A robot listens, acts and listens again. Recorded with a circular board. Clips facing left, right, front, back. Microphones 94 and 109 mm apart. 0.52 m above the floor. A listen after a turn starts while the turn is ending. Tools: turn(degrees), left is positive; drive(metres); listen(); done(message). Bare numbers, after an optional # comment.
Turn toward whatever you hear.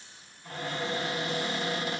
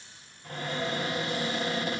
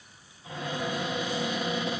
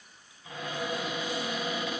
# The cupboard door: 60° right.
turn(-60)
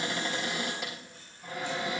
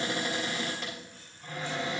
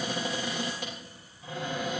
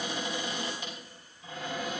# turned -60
done("Found it: a cupboard door, straight ahead.")